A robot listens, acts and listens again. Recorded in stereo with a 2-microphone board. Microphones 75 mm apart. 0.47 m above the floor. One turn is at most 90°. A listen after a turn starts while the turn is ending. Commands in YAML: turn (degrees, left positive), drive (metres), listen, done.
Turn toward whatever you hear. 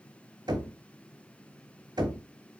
turn: -70
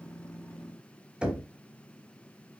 turn: -15
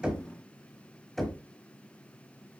done: "Facing the knocking."